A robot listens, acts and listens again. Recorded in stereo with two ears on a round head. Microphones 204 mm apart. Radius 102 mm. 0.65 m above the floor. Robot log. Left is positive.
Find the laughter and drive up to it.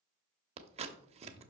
cmd idle
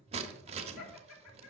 cmd yaw +90
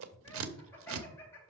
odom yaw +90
note: So it is at 10° left.
cmd yaw +10
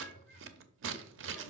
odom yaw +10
cmd idle
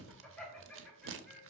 cmd fwd 1.0
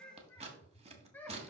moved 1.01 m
note: The laughter is now 10° left.
cmd yaw +10
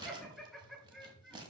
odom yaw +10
cmd fwd 1.0
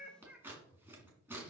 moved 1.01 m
cmd fwd 1.0
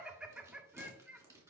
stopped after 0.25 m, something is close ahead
end: Arrived at the laughter, straight ahead.